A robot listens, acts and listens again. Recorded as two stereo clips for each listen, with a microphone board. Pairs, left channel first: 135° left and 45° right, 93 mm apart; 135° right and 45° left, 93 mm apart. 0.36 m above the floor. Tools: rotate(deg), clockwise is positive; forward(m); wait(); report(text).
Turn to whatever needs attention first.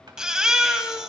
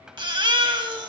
rotate(-35)
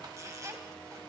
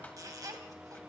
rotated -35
wait()
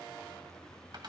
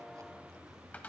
wait()
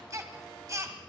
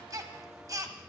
report("Found it: a baby crying, straight ahead, 1 to 2 m away.")